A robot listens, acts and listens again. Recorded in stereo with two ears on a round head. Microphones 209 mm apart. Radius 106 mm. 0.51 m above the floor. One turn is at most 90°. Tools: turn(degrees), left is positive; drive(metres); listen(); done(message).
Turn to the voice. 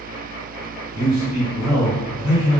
turn(degrees=-20)
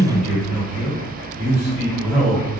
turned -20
done("Facing the man speaking, 1 to 2 m away.")